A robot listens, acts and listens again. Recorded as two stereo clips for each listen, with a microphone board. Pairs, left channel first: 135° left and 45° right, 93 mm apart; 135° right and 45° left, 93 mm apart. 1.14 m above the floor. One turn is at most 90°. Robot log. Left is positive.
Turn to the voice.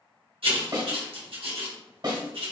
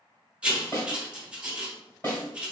cmd idle
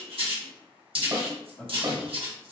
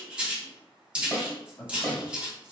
note: The man speaking: 170° left.
cmd yaw +90
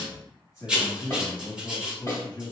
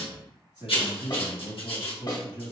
note: The man speaking is now 80° left.
cmd yaw +80
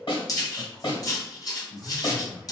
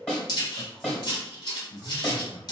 note: The man speaking is now 25° left.
cmd yaw +25
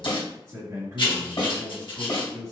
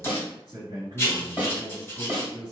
end: Found it: a man speaking, straight ahead.